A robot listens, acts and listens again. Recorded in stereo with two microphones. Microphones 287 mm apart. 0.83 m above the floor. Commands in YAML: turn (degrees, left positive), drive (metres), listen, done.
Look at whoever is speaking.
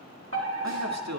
turn: -70
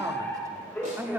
done: "Found it: a man speaking, straight ahead."